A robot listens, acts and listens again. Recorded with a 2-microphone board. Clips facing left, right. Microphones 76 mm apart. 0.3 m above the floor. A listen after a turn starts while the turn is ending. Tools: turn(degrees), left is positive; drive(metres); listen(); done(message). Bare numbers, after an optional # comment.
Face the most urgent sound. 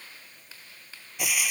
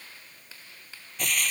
listen()
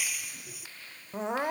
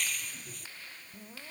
turn(90)
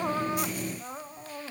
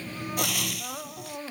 done("Facing the crying.")